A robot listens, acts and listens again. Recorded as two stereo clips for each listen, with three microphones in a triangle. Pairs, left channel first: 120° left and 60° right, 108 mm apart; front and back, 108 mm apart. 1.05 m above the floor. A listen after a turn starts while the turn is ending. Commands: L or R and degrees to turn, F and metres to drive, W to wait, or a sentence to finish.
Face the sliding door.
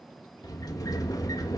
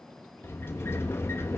L65
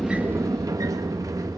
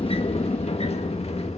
Found it: a sliding door, straight ahead, 1 to 2 m away.